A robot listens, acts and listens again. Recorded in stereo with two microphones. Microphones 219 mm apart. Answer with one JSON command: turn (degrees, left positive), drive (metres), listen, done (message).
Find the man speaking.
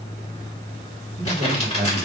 {"turn": -30}
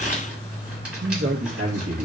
{"turn": -100}
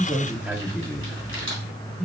{"done": "Found it: a man speaking, straight ahead."}